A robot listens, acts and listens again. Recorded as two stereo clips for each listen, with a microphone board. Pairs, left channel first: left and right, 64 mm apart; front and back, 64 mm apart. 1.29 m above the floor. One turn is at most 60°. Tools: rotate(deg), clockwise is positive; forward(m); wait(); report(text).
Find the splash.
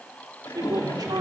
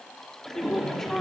rotate(-60)
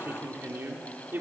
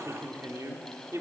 rotate(-30)
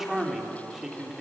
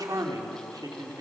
report("Facing where the splash came from. I can't hear it now.")